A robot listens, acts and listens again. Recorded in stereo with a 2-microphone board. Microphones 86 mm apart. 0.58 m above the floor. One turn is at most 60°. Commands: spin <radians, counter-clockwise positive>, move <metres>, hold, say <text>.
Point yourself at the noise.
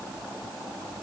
hold
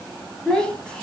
spin 0.52
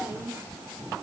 spin -0.44
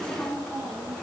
say Facing the child speaking, over 4 m away.